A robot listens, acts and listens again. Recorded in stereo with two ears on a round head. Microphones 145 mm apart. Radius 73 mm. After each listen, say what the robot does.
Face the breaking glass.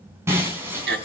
Turn 15° right.
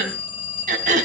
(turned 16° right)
Keep listening.
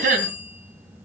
I heard breaking glass, but can't make it out now. It was about straight ahead or 145° right.